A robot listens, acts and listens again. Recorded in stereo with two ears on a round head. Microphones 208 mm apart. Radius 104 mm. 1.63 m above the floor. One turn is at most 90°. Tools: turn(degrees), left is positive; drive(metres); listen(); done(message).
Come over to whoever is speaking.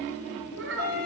turn(degrees=-55)
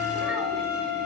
listen()
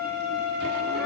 listen()
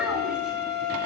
done("I heard a child speaking, but can't make it out now. It was about straight ahead or 70° right. I did not reach it.")